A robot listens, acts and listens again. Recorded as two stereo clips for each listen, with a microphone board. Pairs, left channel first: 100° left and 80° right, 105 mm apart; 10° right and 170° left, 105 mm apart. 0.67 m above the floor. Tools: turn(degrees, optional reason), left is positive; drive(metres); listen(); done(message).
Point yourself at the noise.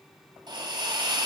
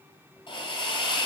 turn(degrees=-40, reason="The hiss: 40° right.")
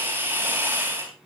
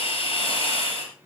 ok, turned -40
turn(degrees=-15, reason="The hiss is now 15° right.")
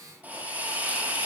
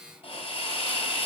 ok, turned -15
done("Facing the hiss.")